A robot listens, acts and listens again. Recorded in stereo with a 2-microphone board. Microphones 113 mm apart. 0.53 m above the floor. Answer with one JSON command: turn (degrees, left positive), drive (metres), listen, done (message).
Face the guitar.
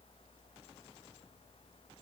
{"listen": true}
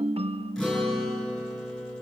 {"turn": 30}
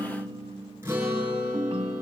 {"turn": -25}
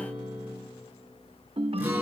{"turn": -15}
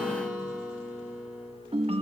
{"done": "Found it: a guitar, straight ahead, over 4 m away."}